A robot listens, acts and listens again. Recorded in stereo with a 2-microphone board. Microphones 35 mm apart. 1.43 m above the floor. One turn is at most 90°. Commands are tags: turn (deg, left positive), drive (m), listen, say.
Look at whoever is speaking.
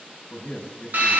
<turn deg="55"/>
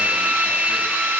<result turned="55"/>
<listen/>
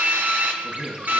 <say>Found it: a man speaking, straight ahead.</say>